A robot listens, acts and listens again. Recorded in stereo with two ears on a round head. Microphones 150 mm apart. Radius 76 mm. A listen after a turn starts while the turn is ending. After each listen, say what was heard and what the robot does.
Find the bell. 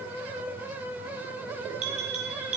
The bell: about 45° right or 135° right. Turn 45° right.
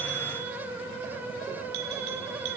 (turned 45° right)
So it is at 90° right. Turn 90° right.
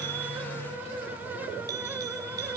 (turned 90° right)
Keep listening.
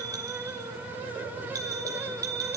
The bell is now 20° right. Turn 20° right.
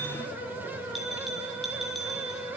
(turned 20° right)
Found it: a bell, straight ahead, over 4 m away.